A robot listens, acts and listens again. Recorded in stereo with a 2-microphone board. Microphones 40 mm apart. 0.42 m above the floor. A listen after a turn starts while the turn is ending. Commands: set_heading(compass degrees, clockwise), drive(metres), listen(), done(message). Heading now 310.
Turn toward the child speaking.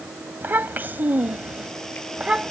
set_heading(330)
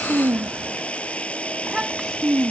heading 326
set_heading(356)
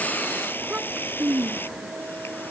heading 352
set_heading(12)
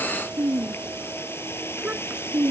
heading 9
set_heading(44)
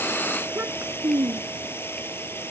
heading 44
set_heading(159)
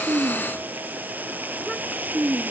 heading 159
done("Facing the child speaking.")